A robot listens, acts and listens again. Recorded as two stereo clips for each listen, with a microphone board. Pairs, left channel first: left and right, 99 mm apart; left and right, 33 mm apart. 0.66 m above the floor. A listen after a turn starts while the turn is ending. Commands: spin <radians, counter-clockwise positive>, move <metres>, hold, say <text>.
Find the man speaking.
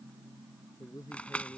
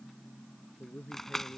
spin 0.70
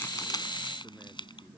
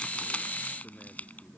hold
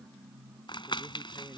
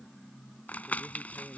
hold
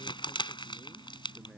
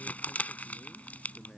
say I heard a man speaking, but can't make it out now. It was about straight ahead or 100° left.